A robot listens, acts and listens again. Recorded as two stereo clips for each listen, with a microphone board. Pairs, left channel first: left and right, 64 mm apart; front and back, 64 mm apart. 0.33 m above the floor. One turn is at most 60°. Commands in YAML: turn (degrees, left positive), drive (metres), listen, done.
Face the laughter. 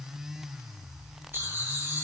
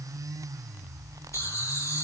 turn: -35
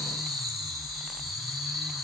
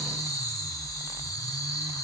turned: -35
done: "Facing the laughter."